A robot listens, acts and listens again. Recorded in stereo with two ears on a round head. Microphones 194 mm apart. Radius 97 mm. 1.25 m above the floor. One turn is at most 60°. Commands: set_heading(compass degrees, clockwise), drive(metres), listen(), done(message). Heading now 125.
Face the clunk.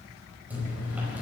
listen()
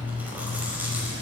listen()
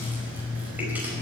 done("I can't make out a clunk, only chewing.")